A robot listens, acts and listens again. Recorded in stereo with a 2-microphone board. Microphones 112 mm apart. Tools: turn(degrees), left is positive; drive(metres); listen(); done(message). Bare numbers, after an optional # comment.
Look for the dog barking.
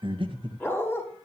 # The dog barking: about 20° left or 160° left.
turn(20)
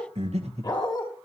# The dog barking: about 40° left or 140° left.
turn(40)
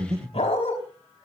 # So it is at 110° left.
turn(110)
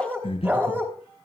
# The dog barking is now 15° right.
turn(-15)
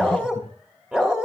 done("Found it: a dog barking, straight ahead.")